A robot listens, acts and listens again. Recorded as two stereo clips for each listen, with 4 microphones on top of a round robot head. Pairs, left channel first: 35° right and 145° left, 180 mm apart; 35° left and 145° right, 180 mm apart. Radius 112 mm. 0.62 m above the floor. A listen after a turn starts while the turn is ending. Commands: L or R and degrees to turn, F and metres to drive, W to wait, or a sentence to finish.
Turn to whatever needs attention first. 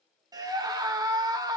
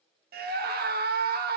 R150
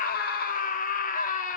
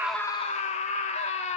R10
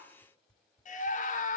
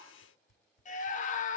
Facing the scream.